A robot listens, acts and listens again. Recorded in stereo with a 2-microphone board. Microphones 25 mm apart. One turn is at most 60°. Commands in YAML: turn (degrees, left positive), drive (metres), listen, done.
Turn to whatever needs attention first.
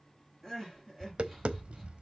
turn: 30
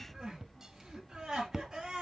turn: -25
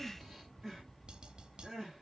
turn: -10
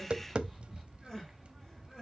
done: "Found it: crying, straight ahead."